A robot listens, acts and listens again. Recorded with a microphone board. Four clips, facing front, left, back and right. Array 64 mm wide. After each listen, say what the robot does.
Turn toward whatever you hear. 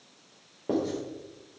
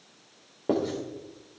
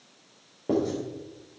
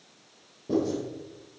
Turn 85° left.
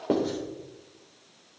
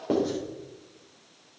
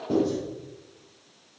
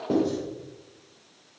Turn 15° left.
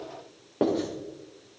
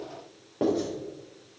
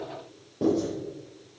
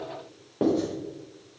Facing the writing, over 4 m away.